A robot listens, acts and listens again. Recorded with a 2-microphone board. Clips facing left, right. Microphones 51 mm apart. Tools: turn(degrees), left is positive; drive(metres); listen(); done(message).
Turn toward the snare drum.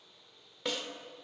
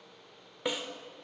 turn(degrees=-30)
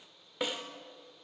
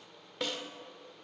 turn(degrees=15)
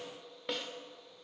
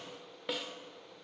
done("Found it: a snare drum, straight ahead, 1 to 2 m away.")